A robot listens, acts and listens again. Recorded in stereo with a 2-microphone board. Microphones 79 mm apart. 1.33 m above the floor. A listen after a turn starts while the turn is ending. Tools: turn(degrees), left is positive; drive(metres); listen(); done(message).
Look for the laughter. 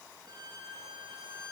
listen()
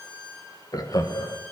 turn(degrees=55)
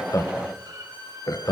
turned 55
turn(degrees=55)
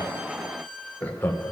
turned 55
turn(degrees=30)
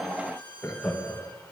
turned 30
turn(degrees=20)
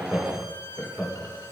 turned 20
done("Facing the laughter, 2 to 4 m away.")